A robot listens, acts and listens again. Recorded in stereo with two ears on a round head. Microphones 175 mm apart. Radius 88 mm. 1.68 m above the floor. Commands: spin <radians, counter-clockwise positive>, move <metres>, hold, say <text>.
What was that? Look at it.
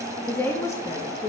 spin 0.35
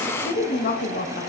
spin 2.27
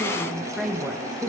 spin -0.17
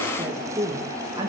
spin -0.35
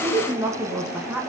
spin -0.17
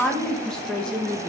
say Found it: a woman speaking, straight ahead.